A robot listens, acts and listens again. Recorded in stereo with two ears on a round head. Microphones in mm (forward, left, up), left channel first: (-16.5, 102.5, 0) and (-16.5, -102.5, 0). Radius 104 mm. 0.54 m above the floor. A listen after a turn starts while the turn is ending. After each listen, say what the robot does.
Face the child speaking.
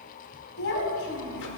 Turn 60° left.
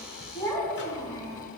Turn 15° left.
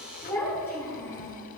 Turn 15° left.
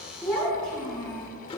Facing the child speaking, over 4 m away.